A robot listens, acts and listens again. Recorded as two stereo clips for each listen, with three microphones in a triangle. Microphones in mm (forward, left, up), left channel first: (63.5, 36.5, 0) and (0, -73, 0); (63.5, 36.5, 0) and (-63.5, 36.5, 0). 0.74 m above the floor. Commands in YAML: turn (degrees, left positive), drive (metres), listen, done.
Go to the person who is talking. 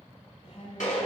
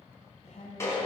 turn: 25
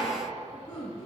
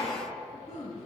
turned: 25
turn: 20
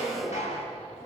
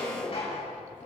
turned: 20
listen: true
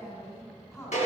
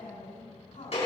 drive: 1.0
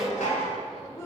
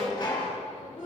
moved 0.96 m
drive: 1.0
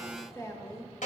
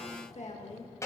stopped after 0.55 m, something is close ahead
done: "I am next to the woman speaking."